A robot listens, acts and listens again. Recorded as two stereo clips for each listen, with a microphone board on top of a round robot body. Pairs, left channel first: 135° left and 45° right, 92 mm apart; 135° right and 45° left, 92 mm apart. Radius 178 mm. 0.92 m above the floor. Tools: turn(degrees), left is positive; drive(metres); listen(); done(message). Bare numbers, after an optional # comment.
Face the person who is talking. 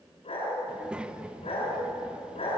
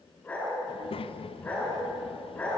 # The child speaking: 125° right.
turn(-125)
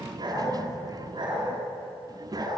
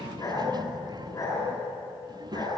done("Found it: a child speaking, straight ahead.")